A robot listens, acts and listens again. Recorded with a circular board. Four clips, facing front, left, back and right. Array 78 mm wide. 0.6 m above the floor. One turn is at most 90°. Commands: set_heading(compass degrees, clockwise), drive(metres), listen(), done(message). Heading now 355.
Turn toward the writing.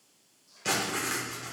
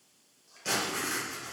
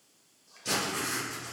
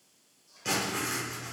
set_heading(10)
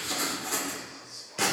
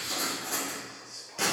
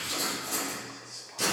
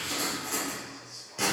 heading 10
done("Found it: writing, straight ahead, 1 to 2 m away.")